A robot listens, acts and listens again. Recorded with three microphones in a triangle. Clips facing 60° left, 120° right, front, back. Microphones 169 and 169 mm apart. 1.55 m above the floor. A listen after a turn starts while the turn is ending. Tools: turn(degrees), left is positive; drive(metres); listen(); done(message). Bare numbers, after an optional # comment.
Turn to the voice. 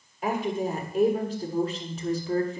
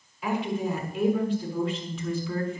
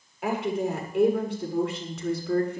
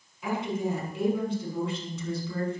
# The woman speaking: 10° left.
turn(10)
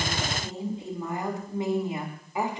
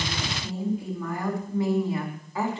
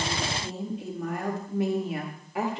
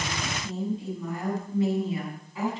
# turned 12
# The woman speaking is now 15° right.
turn(-15)
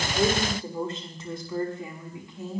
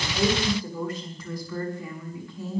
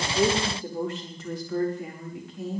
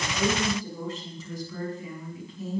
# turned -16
# The woman speaking is now 10° right.
turn(-10)
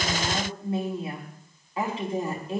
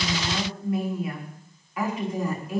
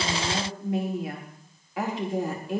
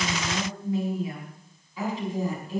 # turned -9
done("Found it: a woman speaking, straight ahead, over 4 m away.")